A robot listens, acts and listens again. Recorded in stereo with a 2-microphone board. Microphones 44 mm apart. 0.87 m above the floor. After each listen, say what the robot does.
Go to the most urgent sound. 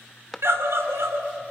Turn 90° right.
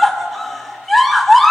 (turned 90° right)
Drive 1.0 m forward.
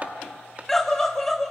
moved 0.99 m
Drive 1.0 m forward.
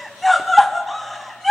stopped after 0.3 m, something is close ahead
I am next to the scream.